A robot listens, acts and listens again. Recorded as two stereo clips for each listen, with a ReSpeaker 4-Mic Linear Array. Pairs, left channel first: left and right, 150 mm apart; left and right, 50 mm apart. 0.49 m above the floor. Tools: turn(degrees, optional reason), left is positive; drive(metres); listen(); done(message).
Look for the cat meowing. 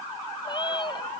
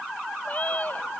turn(degrees=30, reason="The cat meowing: about 30° left or 150° left.")
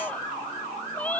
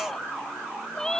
turn(degrees=10, reason="So it is at 10° left.")
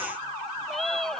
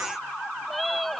done("Found it: a cat meowing, straight ahead.")